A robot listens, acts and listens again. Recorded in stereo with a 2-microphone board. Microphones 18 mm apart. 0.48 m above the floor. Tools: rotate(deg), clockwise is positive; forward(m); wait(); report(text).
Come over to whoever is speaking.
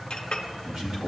rotate(55)
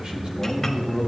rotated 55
rotate(65)
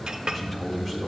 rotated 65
rotate(-15)
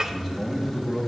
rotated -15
forward(1.0)
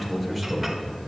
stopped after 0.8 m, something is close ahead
report("I am next to the man speaking.")